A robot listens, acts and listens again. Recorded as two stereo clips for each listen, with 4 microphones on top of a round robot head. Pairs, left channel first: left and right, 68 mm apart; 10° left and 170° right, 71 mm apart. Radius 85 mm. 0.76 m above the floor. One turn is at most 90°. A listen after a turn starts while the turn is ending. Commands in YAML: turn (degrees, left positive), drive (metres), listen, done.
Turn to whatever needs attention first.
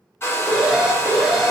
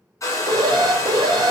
turn: -90
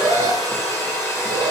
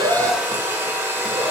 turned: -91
turn: -80
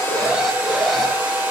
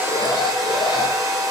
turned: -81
listen: true
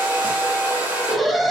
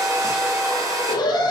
done: "Facing the alarm, under 1 m away."